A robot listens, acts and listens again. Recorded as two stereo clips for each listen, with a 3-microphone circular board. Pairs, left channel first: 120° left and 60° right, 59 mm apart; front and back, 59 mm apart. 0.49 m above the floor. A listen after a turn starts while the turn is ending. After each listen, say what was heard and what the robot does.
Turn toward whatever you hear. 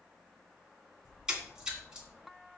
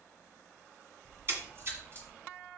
The splash: 135° right. Turn 135° right.
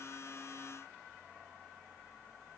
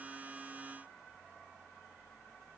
I heard a splash from this way, but can't make it out now.